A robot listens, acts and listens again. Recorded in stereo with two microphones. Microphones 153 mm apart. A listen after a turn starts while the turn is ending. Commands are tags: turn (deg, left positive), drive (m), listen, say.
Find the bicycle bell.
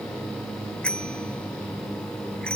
<turn deg="30"/>
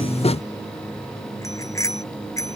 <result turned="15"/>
<turn deg="160"/>
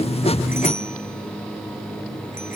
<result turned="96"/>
<turn deg="65"/>
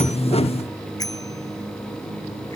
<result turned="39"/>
<turn deg="25"/>
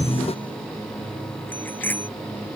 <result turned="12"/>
<turn deg="10"/>
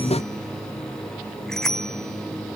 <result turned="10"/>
<say>Found it: a bicycle bell, straight ahead.</say>